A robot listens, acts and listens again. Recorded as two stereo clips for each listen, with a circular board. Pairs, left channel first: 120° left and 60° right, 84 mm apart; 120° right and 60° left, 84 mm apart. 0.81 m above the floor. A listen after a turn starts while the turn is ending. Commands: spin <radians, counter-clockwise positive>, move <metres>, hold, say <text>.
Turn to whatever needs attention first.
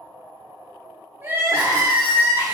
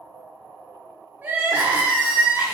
spin -0.17
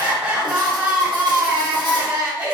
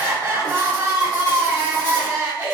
say Found it: crying, straight ahead, 1 to 2 m away.